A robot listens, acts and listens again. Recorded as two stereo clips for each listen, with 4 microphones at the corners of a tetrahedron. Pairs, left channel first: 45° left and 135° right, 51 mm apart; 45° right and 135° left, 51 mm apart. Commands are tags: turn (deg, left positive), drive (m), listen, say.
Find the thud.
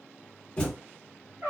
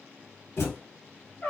<turn deg="-20"/>
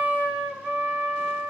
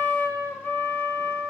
<say>Facing where the thud came from. I can't hear it now.</say>